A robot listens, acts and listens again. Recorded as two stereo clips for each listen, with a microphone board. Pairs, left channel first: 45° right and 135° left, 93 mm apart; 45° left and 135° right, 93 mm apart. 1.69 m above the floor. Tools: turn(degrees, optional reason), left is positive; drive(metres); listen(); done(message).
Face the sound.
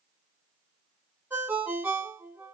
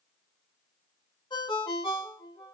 turn(degrees=70, reason="The ringtone: 70° left.")
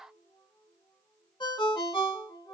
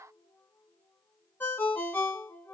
turn(degrees=-20, reason="The ringtone is now 20° right.")
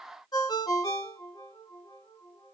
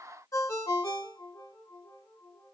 turn(degrees=-10, reason="The ringtone is now 10° right.")
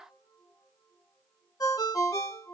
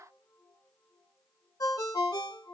done("Facing the ringtone, 1 to 2 m away.")